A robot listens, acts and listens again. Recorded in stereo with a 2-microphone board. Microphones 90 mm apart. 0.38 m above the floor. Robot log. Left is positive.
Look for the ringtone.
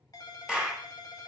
note: The ringtone: about 40° left or 140° left.
cmd yaw +40
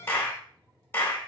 note: So it is at 95° left.
cmd yaw +95
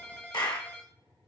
note: The ringtone is now 20° left.
cmd yaw +20
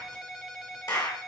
end: Facing the ringtone, under 1 m away.